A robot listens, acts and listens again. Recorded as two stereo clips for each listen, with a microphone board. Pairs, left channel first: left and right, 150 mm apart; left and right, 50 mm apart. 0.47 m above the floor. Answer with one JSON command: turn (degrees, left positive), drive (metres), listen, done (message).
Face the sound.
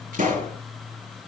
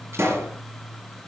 {"turn": -60}
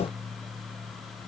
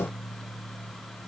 {"listen": true}
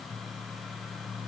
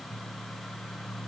{"done": "I heard a pop, but can't make it out now. It was about straight ahead or 60° right."}